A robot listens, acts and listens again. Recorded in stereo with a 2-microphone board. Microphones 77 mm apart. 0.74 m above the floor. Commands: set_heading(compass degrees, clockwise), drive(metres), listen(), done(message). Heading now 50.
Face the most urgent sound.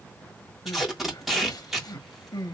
set_heading(345)
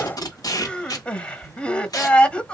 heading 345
set_heading(325)
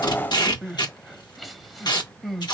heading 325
done("Facing the crying, under 1 m away.")